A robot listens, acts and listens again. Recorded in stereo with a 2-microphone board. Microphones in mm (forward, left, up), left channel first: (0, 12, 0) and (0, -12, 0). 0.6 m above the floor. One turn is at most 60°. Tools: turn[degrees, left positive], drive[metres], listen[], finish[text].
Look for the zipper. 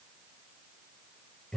Action: listen[]
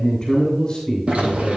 Thought: The zipper: about 65° right or 115° right.
Action: turn[-60]
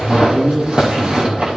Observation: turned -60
Thought: So it is at 50° right.
Action: turn[-50]
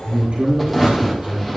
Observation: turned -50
Action: finish[Facing the zipper.]